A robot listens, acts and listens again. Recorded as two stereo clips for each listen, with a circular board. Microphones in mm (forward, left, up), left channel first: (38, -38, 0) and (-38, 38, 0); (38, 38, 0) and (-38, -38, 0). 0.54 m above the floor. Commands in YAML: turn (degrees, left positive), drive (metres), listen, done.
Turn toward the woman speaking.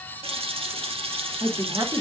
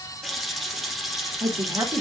turn: 170
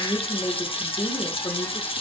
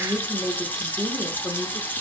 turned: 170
turn: -35
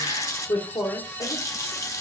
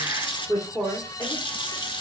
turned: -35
turn: -20
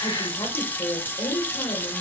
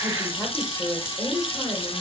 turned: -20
turn: -15
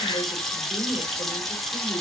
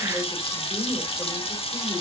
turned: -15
listen: true
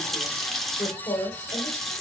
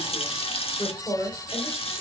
done: "Found it: a woman speaking, straight ahead, 1 to 2 m away."